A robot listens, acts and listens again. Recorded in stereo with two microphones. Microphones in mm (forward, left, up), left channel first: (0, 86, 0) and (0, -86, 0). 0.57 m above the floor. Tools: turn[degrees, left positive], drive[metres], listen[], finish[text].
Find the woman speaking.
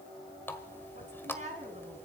Thought: The woman speaking: about 40° right or 140° right.
Action: turn[-40]
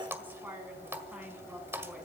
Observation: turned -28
Action: finish[Facing the woman speaking, over 4 m away.]